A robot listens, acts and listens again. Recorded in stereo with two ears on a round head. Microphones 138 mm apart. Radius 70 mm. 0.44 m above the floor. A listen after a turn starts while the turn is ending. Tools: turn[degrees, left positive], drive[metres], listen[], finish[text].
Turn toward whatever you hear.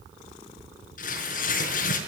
Thought: The tearing paper: about 50° left or 130° left.
Action: turn[50]
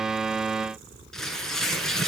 Action: finish[Facing the tearing paper, over 4 m away.]